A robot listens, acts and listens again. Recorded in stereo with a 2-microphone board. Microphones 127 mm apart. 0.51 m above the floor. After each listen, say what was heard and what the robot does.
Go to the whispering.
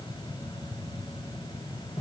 Keep listening.
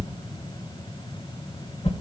Keep listening.
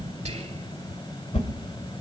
The whispering: about 60° right or 120° right. Turn 60° right.
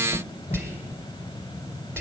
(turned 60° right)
So it is at 20° right. Turn 20° right.
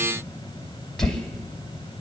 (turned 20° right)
Keep listening.
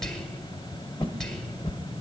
Drive 1.0 m forward.
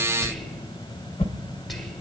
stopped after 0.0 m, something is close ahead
Blocked. The whispering is further on, straight ahead.